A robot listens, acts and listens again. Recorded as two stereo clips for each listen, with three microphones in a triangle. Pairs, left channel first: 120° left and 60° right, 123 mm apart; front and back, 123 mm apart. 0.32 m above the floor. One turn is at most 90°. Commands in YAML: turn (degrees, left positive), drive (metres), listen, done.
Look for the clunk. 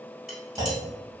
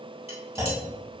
turn: -90
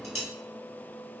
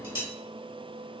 turn: -25
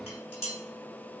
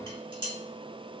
done: "Facing where the clunk came from. I can't hear it now."